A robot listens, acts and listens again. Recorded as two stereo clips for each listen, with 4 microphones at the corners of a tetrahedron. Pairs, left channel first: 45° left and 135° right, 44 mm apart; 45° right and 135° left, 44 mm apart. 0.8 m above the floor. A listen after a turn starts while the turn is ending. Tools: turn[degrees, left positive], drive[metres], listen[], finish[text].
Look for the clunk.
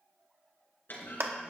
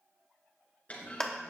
Thought: The clunk: 10° left.
Action: turn[10]
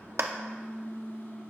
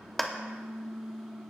Action: finish[I heard a clunk from this way, but can't make it out now.]